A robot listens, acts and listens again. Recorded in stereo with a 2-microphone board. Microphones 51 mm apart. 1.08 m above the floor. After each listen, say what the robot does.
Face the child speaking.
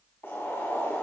Keep listening.
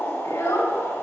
Turn 90° left.
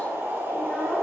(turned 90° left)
Keep listening.
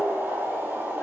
Keep listening.
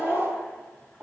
Facing the child speaking.